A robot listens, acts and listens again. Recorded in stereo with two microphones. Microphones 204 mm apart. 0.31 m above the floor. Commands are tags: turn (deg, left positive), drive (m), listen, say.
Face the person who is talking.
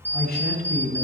<turn deg="50"/>
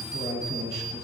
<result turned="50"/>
<turn deg="70"/>
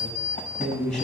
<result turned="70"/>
<say>Facing the man speaking.</say>